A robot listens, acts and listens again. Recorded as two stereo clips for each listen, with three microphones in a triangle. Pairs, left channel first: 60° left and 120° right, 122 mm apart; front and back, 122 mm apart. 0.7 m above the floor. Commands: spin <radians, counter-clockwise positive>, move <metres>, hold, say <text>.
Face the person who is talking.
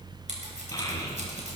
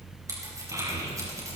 spin 2.09
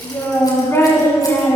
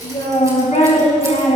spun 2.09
say Facing the child speaking.